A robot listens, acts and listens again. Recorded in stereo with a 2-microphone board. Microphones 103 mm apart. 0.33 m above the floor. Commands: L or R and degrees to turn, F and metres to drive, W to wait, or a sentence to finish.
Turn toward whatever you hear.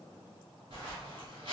R65
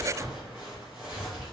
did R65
R10
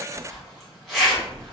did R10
Facing the zipper.